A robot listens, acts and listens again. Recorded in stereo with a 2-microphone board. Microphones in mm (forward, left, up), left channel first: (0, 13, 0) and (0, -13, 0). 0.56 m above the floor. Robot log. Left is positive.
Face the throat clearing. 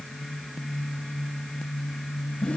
cmd idle
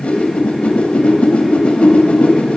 cmd idle
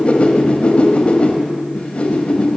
end: I can't make out throat clearing, only a whoosh.